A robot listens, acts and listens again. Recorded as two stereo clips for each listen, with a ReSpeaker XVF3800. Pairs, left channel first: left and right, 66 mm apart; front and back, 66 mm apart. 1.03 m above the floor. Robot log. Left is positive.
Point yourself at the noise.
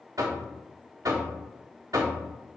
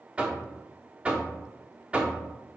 note: The knocking: 110° right.
cmd yaw -110
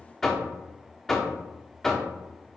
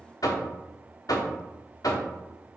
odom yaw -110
end: Facing the knocking.